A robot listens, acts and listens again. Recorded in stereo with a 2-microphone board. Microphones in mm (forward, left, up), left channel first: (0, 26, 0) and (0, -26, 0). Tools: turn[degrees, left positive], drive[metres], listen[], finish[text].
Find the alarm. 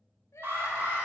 Thought: The alarm: about 45° right or 135° right.
Action: turn[-45]
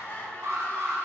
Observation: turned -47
Thought: So it is at 80° right.
Action: turn[-80]
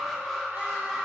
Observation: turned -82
Action: finish[Facing the alarm.]